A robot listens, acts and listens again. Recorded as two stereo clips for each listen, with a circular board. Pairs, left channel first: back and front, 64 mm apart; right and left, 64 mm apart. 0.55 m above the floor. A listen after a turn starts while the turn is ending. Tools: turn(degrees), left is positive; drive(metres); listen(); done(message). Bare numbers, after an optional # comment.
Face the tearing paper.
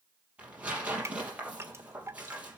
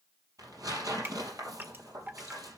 # The tearing paper: 70° left.
turn(70)
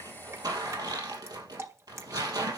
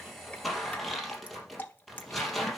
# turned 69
done("Found it: tearing paper, straight ahead, 2 to 4 m away.")